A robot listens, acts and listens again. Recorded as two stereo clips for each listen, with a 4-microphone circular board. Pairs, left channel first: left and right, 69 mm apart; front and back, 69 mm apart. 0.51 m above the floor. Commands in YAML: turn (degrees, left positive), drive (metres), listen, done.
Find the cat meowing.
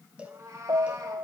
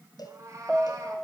turn: -135
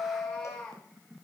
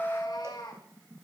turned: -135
turn: 15
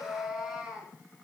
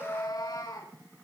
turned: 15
turn: -10
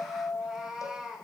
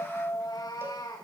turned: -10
done: "Facing the cat meowing, over 4 m away."